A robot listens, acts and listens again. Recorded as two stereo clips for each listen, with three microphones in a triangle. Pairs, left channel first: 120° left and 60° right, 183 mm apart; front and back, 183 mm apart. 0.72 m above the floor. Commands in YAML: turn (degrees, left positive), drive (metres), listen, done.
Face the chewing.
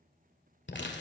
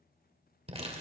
listen: true
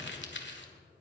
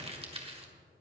listen: true
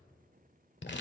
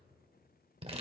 done: "I can't make out chewing to turn to."